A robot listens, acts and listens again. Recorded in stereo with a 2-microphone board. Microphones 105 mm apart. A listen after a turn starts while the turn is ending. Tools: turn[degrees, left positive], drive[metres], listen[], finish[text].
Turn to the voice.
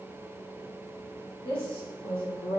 Thought: The woman speaking: about 55° left or 125° left.
Action: turn[55]
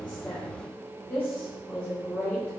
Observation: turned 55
Thought: So it is at 20° left.
Action: turn[20]
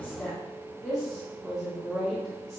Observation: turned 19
Action: finish[Facing the woman speaking.]